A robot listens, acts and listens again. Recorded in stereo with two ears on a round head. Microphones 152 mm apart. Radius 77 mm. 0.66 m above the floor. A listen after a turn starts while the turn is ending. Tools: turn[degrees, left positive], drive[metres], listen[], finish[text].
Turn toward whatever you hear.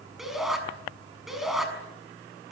Action: turn[30]
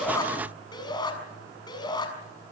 Thought: So it is at 155° left.
Action: turn[155]
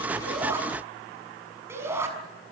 Thought: The shout is now 15° right.
Action: turn[-15]
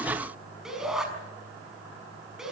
Action: finish[Found it: a shout, straight ahead.]